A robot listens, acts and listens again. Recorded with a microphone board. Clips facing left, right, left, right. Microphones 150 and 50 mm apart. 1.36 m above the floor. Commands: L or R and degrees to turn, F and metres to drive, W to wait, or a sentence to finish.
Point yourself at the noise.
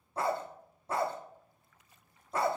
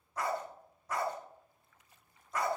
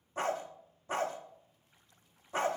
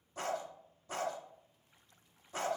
L30
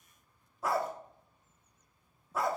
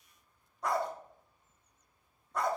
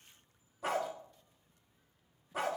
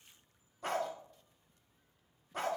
Found it: a dog barking, straight ahead, 1 to 2 m away.